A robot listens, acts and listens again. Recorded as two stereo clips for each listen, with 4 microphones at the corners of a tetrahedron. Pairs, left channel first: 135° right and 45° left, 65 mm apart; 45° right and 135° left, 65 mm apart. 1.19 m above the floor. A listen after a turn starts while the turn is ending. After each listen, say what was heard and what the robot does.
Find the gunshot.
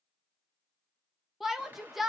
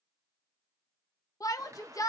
The gunshot: 105° left. Turn 105° left.
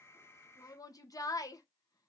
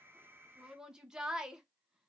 Facing where the gunshot came from. I can't hear it now.